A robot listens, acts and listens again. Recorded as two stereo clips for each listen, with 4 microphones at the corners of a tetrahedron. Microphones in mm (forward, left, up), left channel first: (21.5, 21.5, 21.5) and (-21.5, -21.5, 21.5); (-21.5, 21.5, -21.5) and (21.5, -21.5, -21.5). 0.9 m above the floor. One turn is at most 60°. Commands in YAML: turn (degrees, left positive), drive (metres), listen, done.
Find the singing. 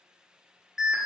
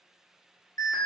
listen: true
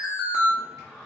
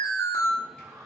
turn: -25
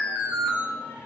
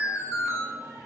turn: -15
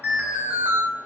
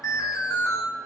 listen: true
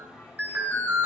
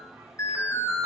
done: "Found it: singing, straight ahead."